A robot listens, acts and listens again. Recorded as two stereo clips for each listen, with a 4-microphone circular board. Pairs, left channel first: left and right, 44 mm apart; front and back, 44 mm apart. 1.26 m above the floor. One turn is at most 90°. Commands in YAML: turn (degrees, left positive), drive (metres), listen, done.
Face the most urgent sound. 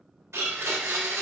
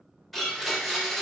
listen: true
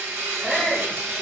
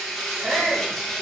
turn: 90
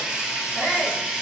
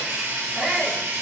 turn: 85
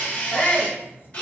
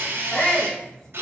turn: 35
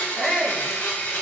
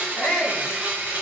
turn: 10
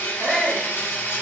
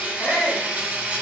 done: "Facing the shout."